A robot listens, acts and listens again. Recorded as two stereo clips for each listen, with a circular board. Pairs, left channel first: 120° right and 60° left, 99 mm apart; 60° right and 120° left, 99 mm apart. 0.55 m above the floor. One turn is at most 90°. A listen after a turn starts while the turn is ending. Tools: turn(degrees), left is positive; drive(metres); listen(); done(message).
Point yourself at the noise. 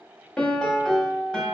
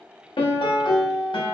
turn(degrees=-40)
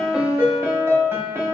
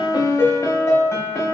done("Found it: a piano, straight ahead, under 1 m away.")